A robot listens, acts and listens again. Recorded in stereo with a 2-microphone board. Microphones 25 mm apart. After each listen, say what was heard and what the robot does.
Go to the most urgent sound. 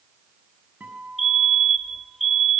Turn 30° left.
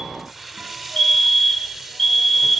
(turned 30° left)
So it is at 150° left. Turn 150° left.
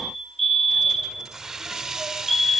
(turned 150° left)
Drive 1.0 m forward.
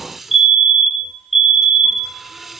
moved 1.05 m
The fire alarm is now 10° right. Turn 10° right.
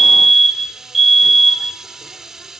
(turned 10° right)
Drive 1.0 m forward.
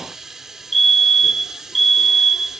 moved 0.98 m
Drive 1.0 m forward.
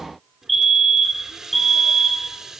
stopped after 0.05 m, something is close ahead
I am next to the fire alarm.